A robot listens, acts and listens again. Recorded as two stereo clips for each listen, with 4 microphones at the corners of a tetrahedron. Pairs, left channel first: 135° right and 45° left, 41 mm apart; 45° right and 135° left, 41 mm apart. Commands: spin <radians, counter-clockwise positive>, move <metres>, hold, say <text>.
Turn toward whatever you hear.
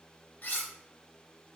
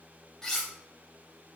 spin -2.09
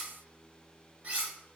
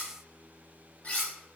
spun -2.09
say Facing the cutlery clinking, under 1 m away.